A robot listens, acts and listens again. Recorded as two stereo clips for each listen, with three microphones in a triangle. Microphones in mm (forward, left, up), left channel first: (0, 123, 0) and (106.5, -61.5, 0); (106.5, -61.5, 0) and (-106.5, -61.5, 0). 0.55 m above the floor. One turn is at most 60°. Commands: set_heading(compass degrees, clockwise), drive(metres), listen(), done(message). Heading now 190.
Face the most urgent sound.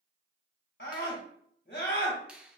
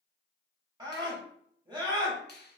set_heading(130)
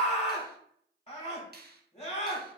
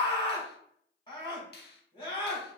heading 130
set_heading(70)
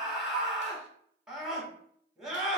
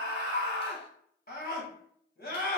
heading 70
set_heading(45)
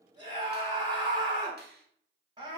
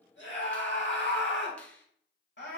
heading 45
done("Facing the scream, 1 to 2 m away.")